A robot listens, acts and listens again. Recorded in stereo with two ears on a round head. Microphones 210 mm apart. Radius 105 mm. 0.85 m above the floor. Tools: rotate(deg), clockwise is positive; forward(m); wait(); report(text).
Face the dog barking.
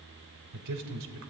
wait()
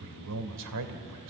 wait()
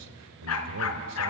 rotate(-70)
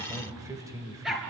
report("Found it: a dog barking, straight ahead, 2 to 4 m away.")